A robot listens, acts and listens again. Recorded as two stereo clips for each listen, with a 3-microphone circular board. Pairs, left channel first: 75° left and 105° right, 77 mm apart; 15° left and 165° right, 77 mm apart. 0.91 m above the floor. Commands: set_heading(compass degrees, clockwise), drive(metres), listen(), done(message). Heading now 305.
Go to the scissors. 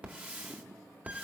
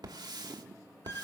listen()
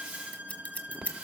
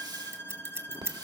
set_heading(160)
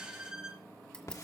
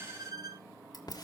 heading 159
listen()
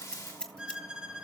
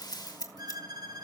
drive(1.0)
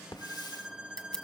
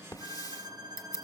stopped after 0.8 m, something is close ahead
done("Arrived at the scissors, straight ahead.")